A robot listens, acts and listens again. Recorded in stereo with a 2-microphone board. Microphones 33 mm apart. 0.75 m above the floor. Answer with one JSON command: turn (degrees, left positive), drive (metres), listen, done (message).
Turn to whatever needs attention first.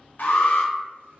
{"turn": 65}
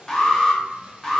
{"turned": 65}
{"turn": 25}
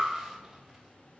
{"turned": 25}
{"listen": true}
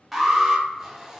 {"done": "Found it: an alarm, straight ahead, 1 to 2 m away."}